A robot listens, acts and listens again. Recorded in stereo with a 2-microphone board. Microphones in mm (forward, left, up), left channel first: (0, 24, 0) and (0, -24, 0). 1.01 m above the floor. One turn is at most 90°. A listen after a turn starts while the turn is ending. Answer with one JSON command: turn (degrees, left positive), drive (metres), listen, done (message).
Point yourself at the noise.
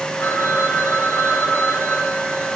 {"turn": 90}
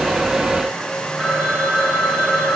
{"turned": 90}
{"turn": -20}
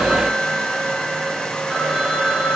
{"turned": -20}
{"turn": -10}
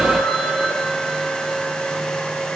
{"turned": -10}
{"done": "Facing the phone ringing."}